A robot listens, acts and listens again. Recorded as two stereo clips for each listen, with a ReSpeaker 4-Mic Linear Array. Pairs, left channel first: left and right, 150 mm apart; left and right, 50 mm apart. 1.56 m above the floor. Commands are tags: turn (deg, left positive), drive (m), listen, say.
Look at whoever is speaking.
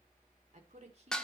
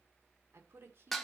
<turn deg="-45"/>
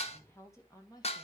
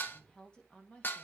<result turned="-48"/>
<turn deg="25"/>
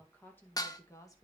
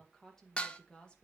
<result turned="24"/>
<turn deg="20"/>
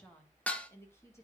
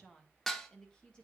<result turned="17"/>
<turn deg="15"/>
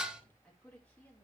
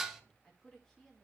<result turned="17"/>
<turn deg="10"/>
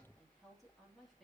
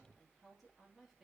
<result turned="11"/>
<say>Found it: a woman speaking, straight ahead, 2 to 4 m away.</say>